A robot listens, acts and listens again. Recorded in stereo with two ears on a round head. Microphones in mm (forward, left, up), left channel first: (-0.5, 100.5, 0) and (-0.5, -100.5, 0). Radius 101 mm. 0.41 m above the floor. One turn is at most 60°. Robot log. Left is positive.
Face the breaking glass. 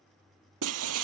note: The breaking glass: about 70° right or 110° right.
cmd yaw -60
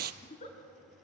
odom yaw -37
note: So it is at 45° right.
cmd yaw -45
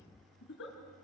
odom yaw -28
note: Nothing new. It was at 20° right.
cmd yaw -20
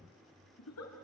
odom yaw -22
end: I heard breaking glass from this way, but can't make it out now.